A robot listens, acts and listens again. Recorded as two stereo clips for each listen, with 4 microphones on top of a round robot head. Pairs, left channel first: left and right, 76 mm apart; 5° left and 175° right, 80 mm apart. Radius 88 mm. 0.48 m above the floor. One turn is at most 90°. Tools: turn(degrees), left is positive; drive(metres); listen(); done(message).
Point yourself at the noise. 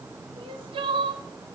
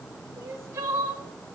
turn(degrees=-90)
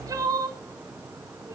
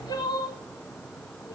turn(degrees=-45)
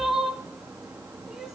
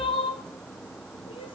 done("Found it: crying, straight ahead, 1 to 2 m away.")